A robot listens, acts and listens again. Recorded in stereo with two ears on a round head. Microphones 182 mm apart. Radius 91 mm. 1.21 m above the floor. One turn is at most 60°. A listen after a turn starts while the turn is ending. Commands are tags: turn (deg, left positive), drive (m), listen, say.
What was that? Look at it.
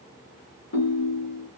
<turn deg="60"/>
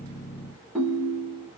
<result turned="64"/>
<say>Facing the ringtone, 1 to 2 m away.</say>